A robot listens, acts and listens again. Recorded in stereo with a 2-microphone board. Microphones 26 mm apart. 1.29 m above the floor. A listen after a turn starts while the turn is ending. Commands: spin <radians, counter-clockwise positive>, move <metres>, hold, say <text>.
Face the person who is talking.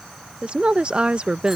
spin -0.70
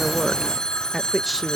say Facing the woman speaking.